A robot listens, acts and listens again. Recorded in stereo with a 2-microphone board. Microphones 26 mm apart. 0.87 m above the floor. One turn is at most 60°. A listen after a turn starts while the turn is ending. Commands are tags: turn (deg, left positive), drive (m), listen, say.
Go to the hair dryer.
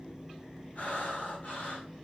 <listen/>
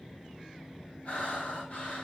<listen/>
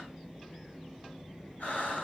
<say>I can't make out a hair dryer, only breathing.</say>